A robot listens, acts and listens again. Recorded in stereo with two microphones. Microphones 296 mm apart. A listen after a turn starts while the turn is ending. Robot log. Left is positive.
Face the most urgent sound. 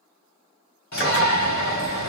note: The shout: about 65° left or 115° left.
cmd yaw +65
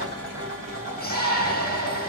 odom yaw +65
note: So it is at 35° left.
cmd yaw +35
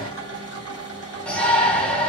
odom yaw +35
end: Facing the shout.